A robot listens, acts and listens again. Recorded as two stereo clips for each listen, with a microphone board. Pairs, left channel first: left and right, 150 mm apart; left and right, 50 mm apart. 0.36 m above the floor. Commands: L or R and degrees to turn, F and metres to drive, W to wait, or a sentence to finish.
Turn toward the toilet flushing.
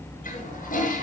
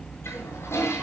L70
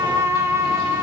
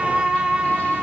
W
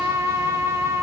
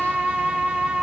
W
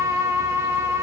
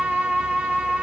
I heard a toilet flushing, but can't make it out now. It was about straight ahead or 40° left.